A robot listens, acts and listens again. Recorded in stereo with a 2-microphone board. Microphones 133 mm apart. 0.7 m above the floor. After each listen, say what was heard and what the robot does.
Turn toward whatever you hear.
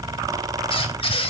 The squeak: about 40° left or 140° left. Turn 40° left.
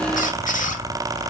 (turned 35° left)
So it is at 100° left. Turn 100° left.
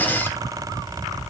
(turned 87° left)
Nothing new. It was at 15° left. Turn 15° left.
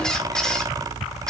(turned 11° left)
Facing the squeak, 1 to 2 m away.